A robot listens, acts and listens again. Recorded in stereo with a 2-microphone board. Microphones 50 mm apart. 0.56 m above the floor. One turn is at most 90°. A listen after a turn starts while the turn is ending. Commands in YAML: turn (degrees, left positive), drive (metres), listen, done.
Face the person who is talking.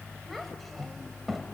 turn: 30
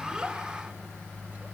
listen: true
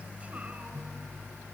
listen: true
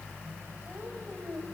done: "I heard a child speaking, but can't make it out now. It was about 30° right or 150° left."